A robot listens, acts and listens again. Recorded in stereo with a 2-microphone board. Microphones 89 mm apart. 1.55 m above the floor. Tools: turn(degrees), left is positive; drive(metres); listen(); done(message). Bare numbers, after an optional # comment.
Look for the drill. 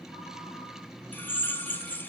# The drill: about 25° left or 155° left.
turn(25)
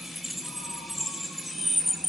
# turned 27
done("Facing the drill, 1 to 2 m away.")